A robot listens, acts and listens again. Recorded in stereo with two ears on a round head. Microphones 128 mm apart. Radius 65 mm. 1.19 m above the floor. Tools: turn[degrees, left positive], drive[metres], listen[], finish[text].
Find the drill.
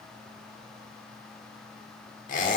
Action: listen[]
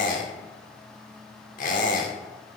Action: listen[]
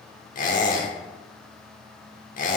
Action: finish[I can't make out a drill, only a squeak.]